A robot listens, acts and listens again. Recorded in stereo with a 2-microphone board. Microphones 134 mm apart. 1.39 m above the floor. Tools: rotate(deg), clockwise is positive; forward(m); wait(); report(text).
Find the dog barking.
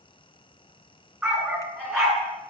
rotate(30)
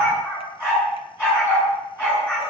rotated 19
rotate(-15)
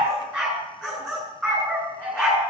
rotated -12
report("Found it: a dog barking, straight ahead, over 4 m away.")